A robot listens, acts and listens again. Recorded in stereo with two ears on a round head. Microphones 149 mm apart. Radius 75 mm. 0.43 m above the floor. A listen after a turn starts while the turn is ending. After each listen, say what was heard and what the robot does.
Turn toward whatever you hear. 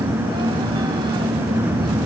Keep listening.
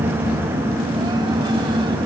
Keep listening.
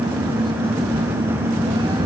I can't make out anything.